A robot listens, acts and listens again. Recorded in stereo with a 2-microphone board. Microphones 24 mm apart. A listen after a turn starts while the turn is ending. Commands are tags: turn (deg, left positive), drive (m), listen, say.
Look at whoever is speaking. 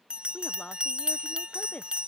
<turn deg="75"/>
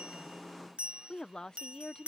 <turn deg="30"/>
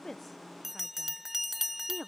<turn deg="-15"/>
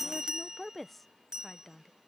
<say>Found it: a woman speaking, straight ahead.</say>